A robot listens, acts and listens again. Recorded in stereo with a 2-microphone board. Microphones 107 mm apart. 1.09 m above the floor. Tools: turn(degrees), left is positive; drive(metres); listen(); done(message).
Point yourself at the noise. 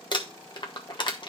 turn(degrees=45)
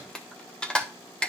turn(degrees=10)
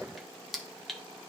done("Facing the crumpling, 1 to 2 m away.")